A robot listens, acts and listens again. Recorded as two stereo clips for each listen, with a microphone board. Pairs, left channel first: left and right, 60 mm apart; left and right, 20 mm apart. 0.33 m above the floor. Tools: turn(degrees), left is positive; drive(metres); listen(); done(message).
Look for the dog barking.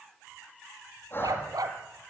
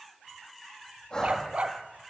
turn(degrees=-90)
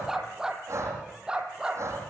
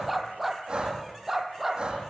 turn(degrees=-15)
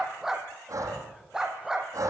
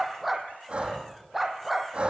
turn(degrees=-10)
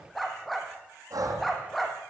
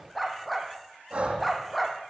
done("Found it: a dog barking, straight ahead, 2 to 4 m away.")